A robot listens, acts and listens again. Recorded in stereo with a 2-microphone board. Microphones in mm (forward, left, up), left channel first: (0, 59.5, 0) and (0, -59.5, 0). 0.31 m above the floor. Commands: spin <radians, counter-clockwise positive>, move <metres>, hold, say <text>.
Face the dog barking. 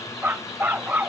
spin -0.52
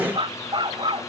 spin -2.36
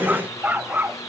spin -0.26
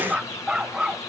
spin -0.17
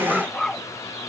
say Facing the dog barking.